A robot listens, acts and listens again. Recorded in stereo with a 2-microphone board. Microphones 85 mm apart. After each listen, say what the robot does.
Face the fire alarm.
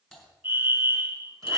Turn 25° right.
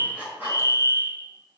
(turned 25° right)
Turn 120° right.
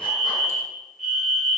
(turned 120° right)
Found it: a fire alarm, straight ahead.